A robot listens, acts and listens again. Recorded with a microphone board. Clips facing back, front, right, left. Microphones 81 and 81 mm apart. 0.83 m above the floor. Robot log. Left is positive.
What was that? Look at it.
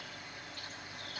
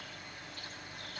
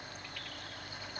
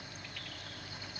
cmd idle
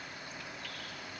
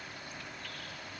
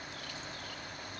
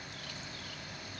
cmd idle
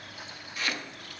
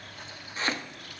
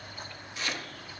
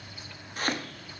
note: The chopping: 55° left.
cmd yaw +55
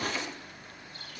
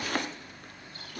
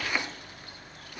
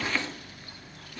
note: The chopping is now 15° right.
cmd yaw -15
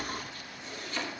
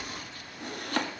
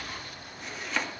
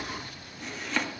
end: Found it: chopping, straight ahead, 1 to 2 m away.